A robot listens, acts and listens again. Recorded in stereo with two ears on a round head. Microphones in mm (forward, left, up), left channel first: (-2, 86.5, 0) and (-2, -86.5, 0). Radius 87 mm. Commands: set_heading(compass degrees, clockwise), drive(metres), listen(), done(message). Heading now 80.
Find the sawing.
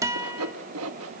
set_heading(170)
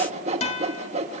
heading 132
set_heading(167)
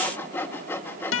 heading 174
set_heading(164)
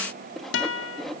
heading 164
done("Facing the sawing.")